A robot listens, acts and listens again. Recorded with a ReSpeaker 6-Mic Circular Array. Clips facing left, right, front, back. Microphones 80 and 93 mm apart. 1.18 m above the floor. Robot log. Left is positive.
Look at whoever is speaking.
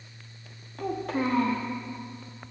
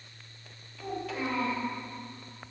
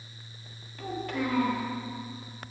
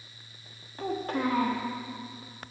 note: The child speaking: 135° left.
cmd yaw +135
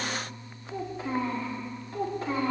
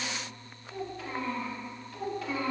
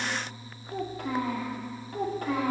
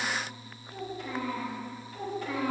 note: The child speaking is now 35° left.
cmd yaw +35
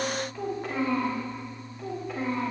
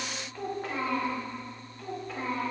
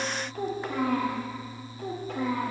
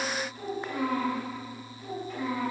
end: Found it: a child speaking, straight ahead.